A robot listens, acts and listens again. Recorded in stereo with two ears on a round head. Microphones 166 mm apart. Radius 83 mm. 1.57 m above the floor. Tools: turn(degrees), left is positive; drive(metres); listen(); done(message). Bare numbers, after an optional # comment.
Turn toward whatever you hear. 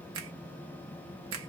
turn(-90)
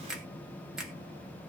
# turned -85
done("Found it: a finger snap, straight ahead, 1 to 2 m away.")